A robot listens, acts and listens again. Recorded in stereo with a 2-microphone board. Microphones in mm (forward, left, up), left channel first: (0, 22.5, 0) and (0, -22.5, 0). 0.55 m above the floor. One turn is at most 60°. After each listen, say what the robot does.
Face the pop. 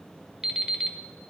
Keep listening.
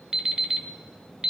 Keep listening.
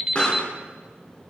Turn 25° left.
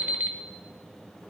Keep listening.
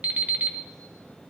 I heard a pop, but can't make it out now. It was about straight ahead or 130° left.